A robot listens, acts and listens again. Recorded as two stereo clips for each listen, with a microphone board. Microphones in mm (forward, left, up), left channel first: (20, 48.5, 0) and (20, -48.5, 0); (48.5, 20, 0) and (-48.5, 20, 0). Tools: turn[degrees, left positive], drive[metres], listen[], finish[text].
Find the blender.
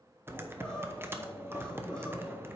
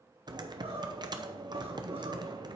Action: listen[]
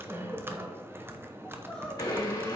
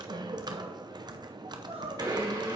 Thought: The blender: 140° left.
Action: turn[140]
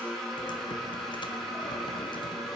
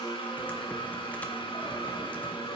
Action: finish[Found it: a blender, straight ahead.]